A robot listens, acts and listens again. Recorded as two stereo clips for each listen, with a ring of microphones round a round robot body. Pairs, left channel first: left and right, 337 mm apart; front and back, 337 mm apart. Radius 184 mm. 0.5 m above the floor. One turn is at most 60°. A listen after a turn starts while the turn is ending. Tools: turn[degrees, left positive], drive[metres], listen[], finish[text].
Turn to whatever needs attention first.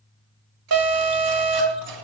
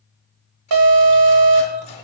Thought: The alarm: 140° right.
Action: turn[-60]
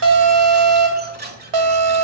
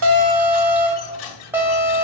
Thought: The alarm is now 95° right.
Action: turn[-60]
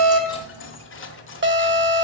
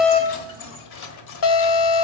Thought: The alarm is now 35° right.
Action: turn[-35]
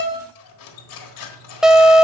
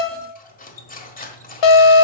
Action: finish[Found it: an alarm, straight ahead.]